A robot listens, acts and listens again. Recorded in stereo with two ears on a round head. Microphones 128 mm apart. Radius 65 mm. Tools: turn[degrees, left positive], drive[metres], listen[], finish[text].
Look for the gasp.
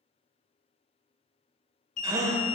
Thought: The gasp: about 25° right or 155° right.
Action: turn[-25]
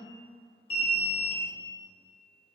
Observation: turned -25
Action: listen[]
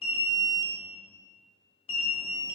Action: finish[I heard a gasp, but can't make it out now. It was about straight ahead or 130° right.]